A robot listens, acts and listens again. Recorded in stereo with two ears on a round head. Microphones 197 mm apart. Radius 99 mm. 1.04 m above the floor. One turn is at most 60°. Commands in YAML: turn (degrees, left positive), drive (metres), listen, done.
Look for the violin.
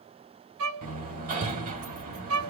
turn: -60
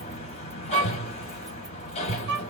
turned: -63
turn: -50
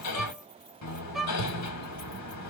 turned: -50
done: "Found it: a violin, straight ahead, under 1 m away."